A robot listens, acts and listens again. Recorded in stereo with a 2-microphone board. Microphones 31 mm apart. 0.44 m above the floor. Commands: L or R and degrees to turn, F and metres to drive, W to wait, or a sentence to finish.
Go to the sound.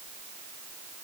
W
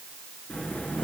L50
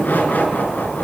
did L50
L80
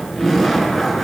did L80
F1.0
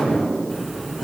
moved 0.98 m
F1.0
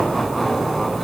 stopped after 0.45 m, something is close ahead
Blocked. The laughter is further on, straight ahead.